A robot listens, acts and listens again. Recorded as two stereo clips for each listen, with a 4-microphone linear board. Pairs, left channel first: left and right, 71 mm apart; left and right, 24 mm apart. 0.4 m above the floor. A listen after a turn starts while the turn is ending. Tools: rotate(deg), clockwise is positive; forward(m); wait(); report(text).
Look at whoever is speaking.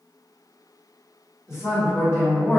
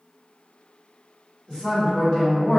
rotate(-40)
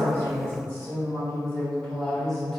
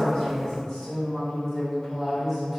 report("Facing the woman speaking, 1 to 2 m away.")